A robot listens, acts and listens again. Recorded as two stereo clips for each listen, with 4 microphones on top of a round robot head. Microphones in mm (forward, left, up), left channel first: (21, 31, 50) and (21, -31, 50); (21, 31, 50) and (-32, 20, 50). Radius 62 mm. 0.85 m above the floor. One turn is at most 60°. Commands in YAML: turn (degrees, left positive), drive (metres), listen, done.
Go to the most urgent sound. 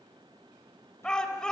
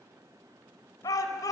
turn: 10
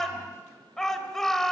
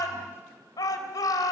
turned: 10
drive: 1.0
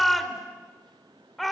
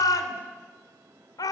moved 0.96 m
drive: 1.0
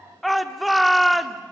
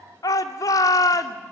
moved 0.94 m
drive: 1.0
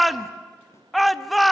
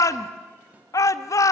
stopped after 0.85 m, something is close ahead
done: "I am next to the shout."